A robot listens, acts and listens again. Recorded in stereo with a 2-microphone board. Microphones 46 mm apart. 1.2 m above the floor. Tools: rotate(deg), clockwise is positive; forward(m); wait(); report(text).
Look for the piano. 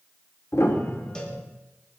rotate(-90)
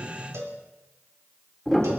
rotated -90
report("Facing the piano, 2 to 4 m away.")